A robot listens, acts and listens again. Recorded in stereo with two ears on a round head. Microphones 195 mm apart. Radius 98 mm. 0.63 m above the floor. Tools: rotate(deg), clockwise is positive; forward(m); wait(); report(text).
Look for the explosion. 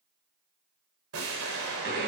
rotate(70)
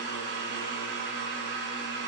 wait()
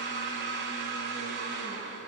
report("I heard an explosion, but can't make it out now. It was about straight ahead or 40° right.")